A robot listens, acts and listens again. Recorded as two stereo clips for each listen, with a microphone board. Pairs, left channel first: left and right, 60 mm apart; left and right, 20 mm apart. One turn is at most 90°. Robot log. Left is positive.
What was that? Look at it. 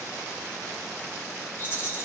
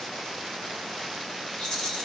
note: The rattle: about 35° left or 145° left.
cmd yaw +35
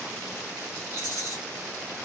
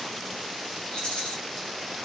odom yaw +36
note: So it is at 105° left.
cmd yaw +90
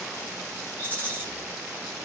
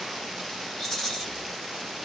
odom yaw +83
note: The rattle is now 25° left.
cmd yaw +25
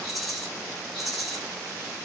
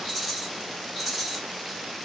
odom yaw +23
end: Facing the rattle.